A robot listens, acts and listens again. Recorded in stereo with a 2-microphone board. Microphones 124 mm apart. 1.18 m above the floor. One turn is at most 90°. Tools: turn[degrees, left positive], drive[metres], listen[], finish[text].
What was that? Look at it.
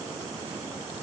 Action: listen[]
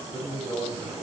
Thought: The man speaking: about 65° left or 115° left.
Action: turn[65]
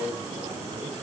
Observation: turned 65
Thought: So it is at 40° left.
Action: turn[40]
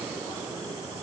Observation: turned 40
Action: listen[]
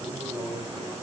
Thought: The man speaking is now 10° right.
Action: turn[-10]
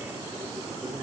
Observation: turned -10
Action: listen[]
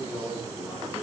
Action: finish[Facing the man speaking, over 4 m away.]